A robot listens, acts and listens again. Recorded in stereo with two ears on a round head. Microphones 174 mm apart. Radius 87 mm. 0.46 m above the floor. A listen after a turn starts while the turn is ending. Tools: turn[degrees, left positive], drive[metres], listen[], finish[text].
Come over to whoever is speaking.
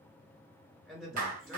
Action: turn[30]
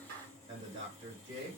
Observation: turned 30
Thought: So it is at 35° right.
Action: turn[-35]
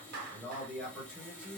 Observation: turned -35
Action: drive[1.0]
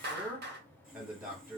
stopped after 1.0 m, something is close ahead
Thought: The man speaking is now 15° right.
Action: turn[-15]
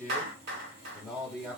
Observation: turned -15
Action: finish[I am next to the man speaking.]